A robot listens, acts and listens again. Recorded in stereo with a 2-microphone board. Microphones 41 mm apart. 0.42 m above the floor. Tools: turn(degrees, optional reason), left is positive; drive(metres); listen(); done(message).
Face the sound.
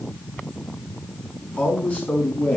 turn(degrees=35, reason="The man speaking: about 35° left or 145° left.")
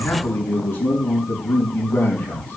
turn(degrees=105, reason="So it is at 105° left.")
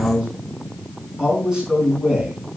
turn(degrees=-15, reason="The man speaking is now 15° right.")
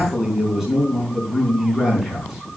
done("Facing the man speaking.")